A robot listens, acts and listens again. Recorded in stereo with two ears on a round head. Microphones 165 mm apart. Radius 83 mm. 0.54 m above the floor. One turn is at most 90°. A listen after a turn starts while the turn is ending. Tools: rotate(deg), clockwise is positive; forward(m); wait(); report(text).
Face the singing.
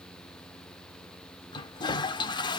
wait()
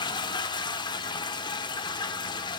wait()
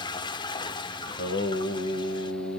rotate(-65)
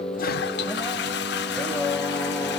report("Found it: singing, straight ahead.")